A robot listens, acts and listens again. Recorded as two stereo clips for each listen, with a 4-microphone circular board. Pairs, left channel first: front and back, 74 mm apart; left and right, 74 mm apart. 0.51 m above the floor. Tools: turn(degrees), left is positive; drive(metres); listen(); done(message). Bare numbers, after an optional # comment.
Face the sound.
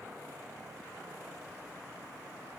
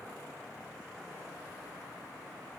listen()
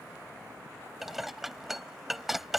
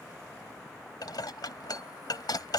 # The dishes clattering: 95° left.
turn(95)
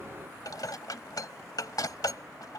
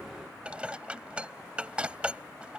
# The dishes clattering is now 15° right.
turn(-15)
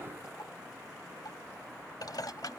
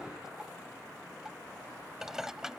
# The dishes clattering is now 10° right.
turn(-10)
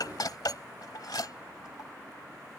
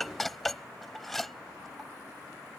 done("Facing the dishes clattering.")